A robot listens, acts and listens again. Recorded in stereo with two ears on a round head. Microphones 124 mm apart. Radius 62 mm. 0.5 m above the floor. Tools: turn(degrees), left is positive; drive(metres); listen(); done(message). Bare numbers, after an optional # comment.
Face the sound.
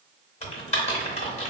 # The typing on a keyboard: about 50° left or 130° left.
turn(50)
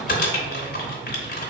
# So it is at 75° left.
turn(75)
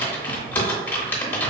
# The typing on a keyboard is now 15° left.
turn(15)
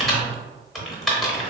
done("Facing the typing on a keyboard, under 1 m away.")